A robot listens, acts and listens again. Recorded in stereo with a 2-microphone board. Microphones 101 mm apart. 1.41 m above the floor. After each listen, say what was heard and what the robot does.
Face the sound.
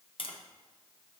The tapping: about 60° left or 120° left. Turn 60° left.
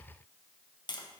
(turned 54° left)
So it is at 50° left. Turn 50° left.
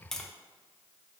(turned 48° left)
Facing the tapping, under 1 m away.